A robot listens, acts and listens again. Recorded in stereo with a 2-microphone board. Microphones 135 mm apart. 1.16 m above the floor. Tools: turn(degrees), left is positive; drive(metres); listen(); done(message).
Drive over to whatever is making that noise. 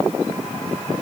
listen()
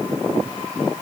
listen()
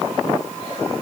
done("I can't make out anything to turn to.")